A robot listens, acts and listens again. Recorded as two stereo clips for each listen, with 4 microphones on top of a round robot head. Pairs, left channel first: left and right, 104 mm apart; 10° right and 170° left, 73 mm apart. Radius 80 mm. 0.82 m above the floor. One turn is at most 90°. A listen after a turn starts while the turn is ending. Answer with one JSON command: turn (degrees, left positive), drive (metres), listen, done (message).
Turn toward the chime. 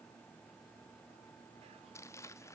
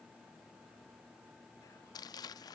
{"listen": true}
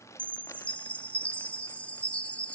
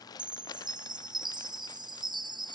{"turn": 90}
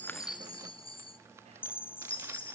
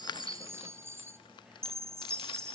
{"turn": 90}
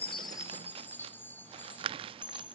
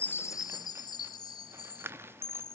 {"turn": 15}
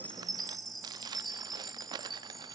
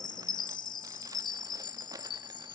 {"done": "Facing the chime."}